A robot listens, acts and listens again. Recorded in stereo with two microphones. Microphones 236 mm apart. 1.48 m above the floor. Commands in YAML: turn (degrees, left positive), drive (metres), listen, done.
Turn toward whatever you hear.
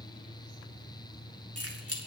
turn: -75
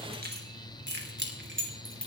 turn: -55
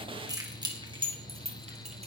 turn: -25
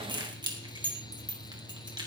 turn: -20
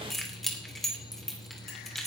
done: "Found it: keys jangling, straight ahead."